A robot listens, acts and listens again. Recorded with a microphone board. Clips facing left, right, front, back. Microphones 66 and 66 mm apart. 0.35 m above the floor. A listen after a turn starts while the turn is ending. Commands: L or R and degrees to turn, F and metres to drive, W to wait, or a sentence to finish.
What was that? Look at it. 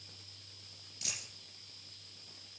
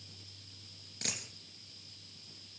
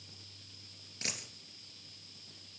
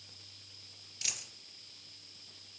R55
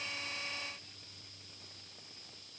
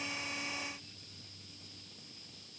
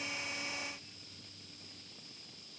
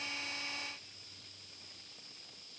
I heard a dropped coin from this way, but can't make it out now.